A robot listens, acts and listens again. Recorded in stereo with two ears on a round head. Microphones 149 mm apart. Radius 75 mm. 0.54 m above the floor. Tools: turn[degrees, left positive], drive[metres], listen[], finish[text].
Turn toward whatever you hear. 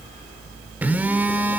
Action: turn[-30]
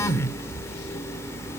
Thought: So it is at 20° left.
Action: turn[20]
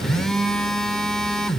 Action: finish[Facing the phone buzzing, 1 to 2 m away.]